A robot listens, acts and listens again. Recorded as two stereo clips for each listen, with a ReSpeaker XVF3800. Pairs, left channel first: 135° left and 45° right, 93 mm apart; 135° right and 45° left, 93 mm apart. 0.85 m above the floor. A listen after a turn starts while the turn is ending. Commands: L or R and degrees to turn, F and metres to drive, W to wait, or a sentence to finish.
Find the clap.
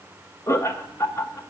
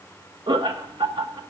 W
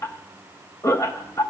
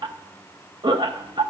W
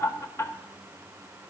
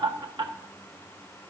I can't make out a clap, only laughter.